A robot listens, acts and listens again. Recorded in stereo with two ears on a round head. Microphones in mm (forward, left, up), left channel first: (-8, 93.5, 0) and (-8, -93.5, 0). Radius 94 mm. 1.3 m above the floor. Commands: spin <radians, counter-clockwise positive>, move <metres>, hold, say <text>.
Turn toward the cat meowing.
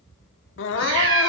spin -1.13
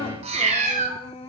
spin -0.70
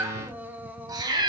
spin -0.44
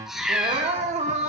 say Found it: a cat meowing, straight ahead.